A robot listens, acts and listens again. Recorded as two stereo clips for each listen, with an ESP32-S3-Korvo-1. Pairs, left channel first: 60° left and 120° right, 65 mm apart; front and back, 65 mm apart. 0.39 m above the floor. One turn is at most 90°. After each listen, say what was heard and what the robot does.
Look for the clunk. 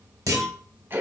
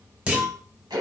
The clunk: 110° right. Turn 90° right.
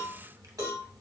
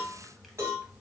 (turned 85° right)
Nothing new. It was at 25° right. Turn 25° right.
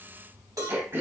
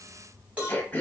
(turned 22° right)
Facing where the clunk came from. I can't hear it now.